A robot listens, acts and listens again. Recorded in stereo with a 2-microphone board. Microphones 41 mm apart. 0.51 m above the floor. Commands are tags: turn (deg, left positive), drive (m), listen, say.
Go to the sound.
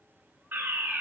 <turn deg="-60"/>
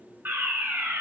<turn deg="-55"/>
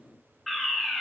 <drive m="1.0"/>
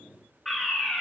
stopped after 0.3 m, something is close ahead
<turn deg="10"/>
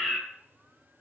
<say>Something is in my way. I am facing the fire alarm but have not reached it.</say>